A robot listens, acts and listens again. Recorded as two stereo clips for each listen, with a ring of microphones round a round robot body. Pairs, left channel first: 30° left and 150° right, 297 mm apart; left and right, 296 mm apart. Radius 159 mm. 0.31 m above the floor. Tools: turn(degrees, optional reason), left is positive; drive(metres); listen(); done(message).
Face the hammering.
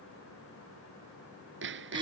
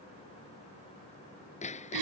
turn(degrees=160, reason="The hammering: 160° left.")
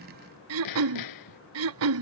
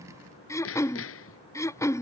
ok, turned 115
turn(degrees=45, reason="The hammering is now 45° left.")
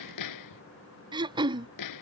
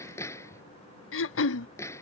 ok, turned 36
turn(degrees=10, reason="The hammering is now 10° left.")
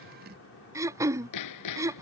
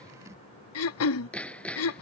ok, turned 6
done("Facing the hammering.")